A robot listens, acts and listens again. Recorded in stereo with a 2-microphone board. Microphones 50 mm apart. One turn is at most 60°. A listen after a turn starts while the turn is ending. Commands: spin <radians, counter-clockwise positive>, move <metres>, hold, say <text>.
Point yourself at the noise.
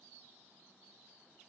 hold
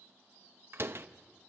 spin -0.87
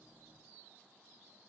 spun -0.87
hold
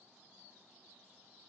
say I heard a door slam, but can't make it out now. It was about straight ahead or 80° right.